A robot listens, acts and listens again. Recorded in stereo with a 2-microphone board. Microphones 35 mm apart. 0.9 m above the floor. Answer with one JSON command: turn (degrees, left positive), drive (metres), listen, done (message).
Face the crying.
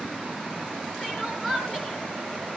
{"turn": 30}
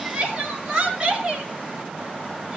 {"turn": -25}
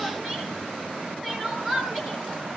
{"done": "Found it: crying, straight ahead."}